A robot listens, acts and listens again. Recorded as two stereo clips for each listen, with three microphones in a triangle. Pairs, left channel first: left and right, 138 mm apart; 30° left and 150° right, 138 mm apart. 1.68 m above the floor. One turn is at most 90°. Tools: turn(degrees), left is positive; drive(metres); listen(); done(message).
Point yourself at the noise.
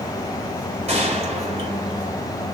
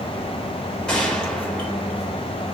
turn(degrees=-55)
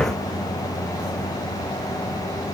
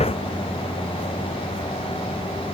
done("I heard a gunshot from this way, but can't make it out now.")